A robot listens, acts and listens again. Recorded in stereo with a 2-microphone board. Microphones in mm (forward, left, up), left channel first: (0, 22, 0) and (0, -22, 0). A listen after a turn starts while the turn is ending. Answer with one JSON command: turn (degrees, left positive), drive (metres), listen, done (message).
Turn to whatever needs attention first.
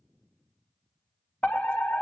{"turn": 30}
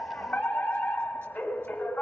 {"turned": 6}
{"turn": 35}
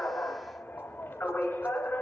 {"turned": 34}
{"turn": 105}
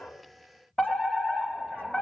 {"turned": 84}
{"turn": 20}
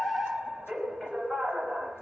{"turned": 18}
{"done": "Found it: a fire alarm, straight ahead."}